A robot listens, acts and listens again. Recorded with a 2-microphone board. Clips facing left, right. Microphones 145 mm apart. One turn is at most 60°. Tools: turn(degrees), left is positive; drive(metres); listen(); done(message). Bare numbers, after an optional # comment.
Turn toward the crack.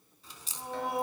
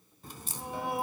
# The crack: about 55° right or 125° right.
turn(-55)
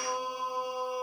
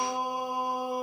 listen()
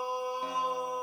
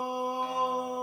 done("I heard a crack, but can't make it out now. It was about straight ahead or 70° right.")